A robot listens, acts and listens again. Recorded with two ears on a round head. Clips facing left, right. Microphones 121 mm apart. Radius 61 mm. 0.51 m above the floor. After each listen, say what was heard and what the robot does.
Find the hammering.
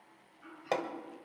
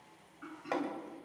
The hammering: about 40° left or 140° left. Turn 40° left.
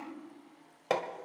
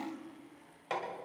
So it is at 100° left. Turn 100° left.
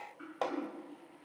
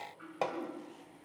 The hammering is now 10° right. Turn 10° right.
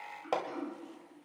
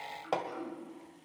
Found it: hammering, straight ahead, 1 to 2 m away.